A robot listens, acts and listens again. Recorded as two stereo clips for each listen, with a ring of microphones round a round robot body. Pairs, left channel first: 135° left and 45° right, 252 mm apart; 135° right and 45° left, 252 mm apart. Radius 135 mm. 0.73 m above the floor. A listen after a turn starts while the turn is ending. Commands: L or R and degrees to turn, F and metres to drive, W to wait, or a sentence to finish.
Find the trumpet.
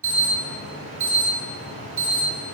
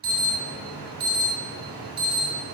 W
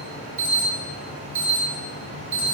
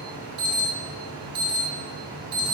W
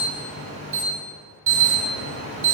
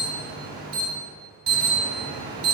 I can't make out a trumpet, only an alarm.